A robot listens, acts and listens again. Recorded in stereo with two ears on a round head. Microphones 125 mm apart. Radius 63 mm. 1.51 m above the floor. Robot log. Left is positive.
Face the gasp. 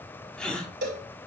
cmd yaw +30
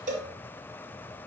cmd idle
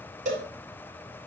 end: I heard a gasp, but can't make it out now. It was about 25° right or 145° left.